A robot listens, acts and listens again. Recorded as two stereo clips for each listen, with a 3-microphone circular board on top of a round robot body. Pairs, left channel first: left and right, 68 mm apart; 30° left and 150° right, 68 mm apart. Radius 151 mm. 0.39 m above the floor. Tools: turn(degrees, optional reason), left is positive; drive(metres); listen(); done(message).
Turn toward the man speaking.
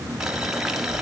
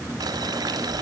listen()
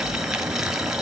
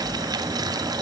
listen()
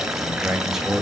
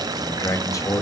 done("Found it: a man speaking, straight ahead.")